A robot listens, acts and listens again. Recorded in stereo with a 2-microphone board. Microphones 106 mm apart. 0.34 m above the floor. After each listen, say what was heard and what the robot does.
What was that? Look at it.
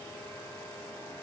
Keep listening.
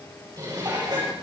The dishes clattering: about 40° right or 140° right. Turn 40° right.
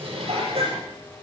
So it is at 95° right. Turn 95° right.
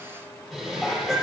Found it: dishes clattering, straight ahead.